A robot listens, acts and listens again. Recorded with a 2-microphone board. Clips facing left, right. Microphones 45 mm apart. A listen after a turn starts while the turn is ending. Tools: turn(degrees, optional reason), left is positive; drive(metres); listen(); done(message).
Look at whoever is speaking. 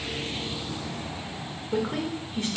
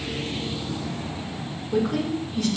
turn(degrees=30, reason="The woman speaking: about 30° left or 150° left.")
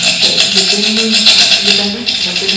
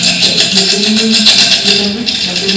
turn(degrees=115, reason="So it is at 115° left.")
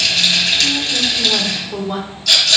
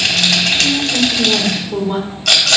turn(degrees=-10, reason="The woman speaking is now 10° right.")
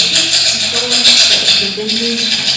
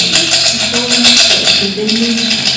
done("Facing the woman speaking, 1 to 2 m away.")